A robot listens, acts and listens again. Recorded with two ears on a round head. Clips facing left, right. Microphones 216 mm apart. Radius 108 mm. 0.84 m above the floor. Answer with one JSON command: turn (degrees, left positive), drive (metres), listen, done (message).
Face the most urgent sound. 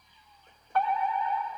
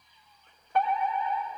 {"turn": -15}
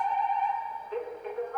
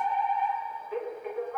{"done": "Found it: a fire alarm, straight ahead, over 4 m away."}